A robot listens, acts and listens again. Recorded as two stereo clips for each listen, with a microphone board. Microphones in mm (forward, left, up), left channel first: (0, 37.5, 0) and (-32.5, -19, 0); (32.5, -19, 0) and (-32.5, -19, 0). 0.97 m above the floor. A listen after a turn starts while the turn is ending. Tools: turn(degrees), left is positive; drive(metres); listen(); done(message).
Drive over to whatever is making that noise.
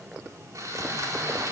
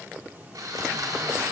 turn(degrees=-155)
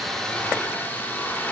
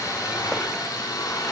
drive(metres=1.0)
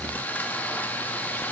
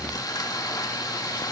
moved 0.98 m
drive(metres=1.0)
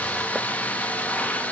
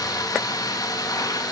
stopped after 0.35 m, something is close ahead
done("Arrived at the sawing, straight ahead.")